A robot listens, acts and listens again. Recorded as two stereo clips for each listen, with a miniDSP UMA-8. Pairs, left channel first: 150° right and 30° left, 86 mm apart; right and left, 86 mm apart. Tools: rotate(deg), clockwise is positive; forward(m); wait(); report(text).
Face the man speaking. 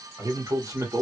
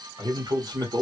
rotate(-70)
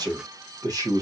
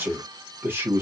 rotate(-45)
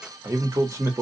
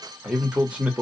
rotate(-30)
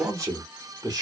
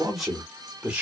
rotate(-15)
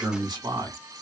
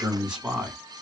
rotate(-10)
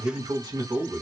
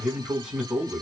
report("Found it: a man speaking, straight ahead.")